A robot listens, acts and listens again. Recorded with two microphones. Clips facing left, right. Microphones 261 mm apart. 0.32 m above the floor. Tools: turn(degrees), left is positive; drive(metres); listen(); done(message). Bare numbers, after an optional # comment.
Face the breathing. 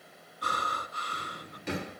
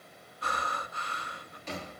# The breathing: about 45° left or 135° left.
turn(45)
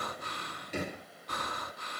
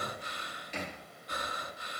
# So it is at 90° left.
turn(90)
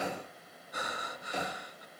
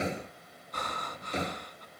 # The breathing is now 10° left.
turn(10)
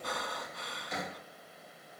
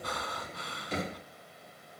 done("Facing the breathing.")